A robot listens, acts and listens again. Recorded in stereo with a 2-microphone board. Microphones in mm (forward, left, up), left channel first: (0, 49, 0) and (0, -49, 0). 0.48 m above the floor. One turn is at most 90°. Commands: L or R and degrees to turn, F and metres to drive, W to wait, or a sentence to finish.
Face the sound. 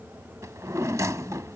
R35
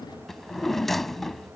Found it: a drawer, straight ahead.